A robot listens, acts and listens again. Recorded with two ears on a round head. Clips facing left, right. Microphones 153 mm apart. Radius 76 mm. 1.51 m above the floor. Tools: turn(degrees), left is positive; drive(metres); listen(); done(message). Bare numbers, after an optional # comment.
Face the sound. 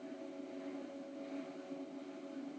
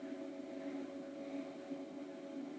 listen()
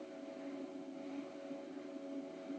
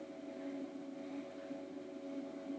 listen()
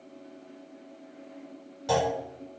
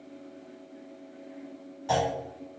# The clunk: about 50° left or 130° left.
turn(50)
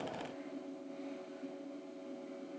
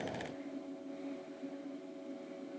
listen()
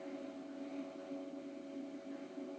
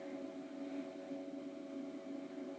done("I heard a clunk, but can't make it out now. It was about straight ahead or 80° left.")